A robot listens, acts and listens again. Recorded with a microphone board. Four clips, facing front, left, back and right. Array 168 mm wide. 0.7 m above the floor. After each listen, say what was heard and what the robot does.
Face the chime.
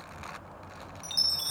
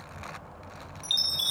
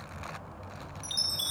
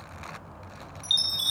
The chime: 30° right. Turn 30° right.
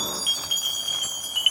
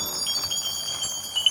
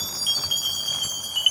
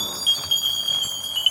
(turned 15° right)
The chime is now 15° right. Turn 15° right.
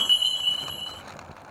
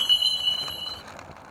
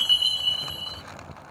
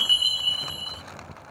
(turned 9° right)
Facing the chime.